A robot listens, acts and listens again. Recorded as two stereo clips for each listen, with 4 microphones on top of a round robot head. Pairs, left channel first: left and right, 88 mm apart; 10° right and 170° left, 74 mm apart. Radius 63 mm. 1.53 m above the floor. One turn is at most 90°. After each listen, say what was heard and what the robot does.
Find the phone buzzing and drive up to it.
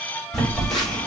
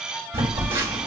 The phone buzzing: 175° left. Turn 90° left.
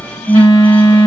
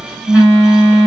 The phone buzzing is now 100° left. Turn 90° left.
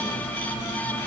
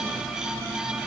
Nothing new. It was at 10° left. Turn 10° left.
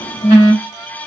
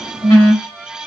The phone buzzing is now 30° left. Turn 30° left.
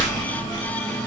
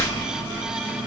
Drive 1.0 m forward.
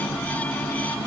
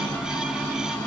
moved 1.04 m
Keep listening.
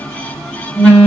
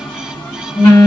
Drive 1.0 m forward.
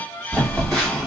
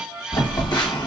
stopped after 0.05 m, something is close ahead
Arrived at the phone buzzing, straight ahead.